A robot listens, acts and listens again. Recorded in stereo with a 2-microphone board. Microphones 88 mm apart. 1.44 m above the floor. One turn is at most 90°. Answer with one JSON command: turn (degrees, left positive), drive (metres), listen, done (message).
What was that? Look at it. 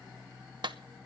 {"turn": -60}
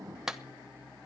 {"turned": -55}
{"done": "Found it: a clap, straight ahead, 1 to 2 m away."}